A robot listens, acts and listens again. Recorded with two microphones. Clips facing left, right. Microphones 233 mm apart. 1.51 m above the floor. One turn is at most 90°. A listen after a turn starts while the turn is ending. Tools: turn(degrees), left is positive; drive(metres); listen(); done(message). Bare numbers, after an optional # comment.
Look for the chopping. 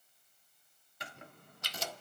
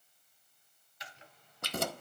# The chopping: about 60° left or 120° left.
turn(60)
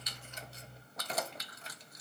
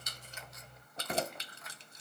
listen()
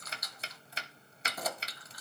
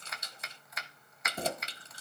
# So it is at 35° left.
turn(35)
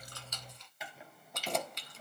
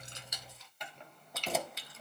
done("Found it: chopping, straight ahead, 1 to 2 m away.")